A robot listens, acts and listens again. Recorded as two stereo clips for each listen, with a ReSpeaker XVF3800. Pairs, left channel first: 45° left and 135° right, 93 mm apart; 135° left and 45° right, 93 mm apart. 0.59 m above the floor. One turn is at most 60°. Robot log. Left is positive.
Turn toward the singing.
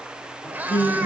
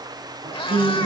note: The singing: 15° right.
cmd yaw -15
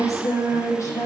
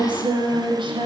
note: The singing is now 10° right.
cmd yaw -10
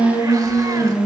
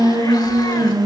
end: Facing the singing.